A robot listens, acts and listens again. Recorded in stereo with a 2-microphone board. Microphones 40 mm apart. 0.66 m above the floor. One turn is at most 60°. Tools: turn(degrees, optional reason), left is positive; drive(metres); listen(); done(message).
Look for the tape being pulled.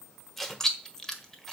turn(degrees=30)
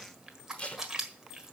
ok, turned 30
turn(degrees=60, reason="So it is at 150° left.")
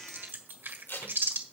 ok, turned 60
turn(degrees=60, reason="The tape being pulled is now 90° left.")
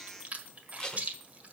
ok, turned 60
turn(degrees=20, reason="The tape being pulled is now 20° left.")
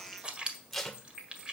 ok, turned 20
turn(degrees=10, reason="The tape being pulled is now 10° left.")
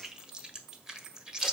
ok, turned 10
listen()
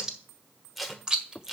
done("Found it: tape being pulled, straight ahead.")